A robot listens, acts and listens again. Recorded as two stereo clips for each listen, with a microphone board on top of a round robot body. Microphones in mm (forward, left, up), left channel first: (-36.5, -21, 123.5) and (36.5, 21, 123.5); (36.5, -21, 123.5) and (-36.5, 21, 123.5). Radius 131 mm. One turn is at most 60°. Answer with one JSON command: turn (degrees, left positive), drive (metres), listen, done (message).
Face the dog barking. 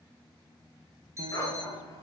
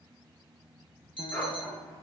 {"turn": -60}
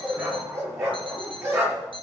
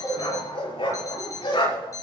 {"turn": -30}
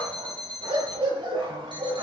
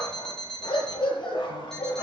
{"done": "Facing the dog barking."}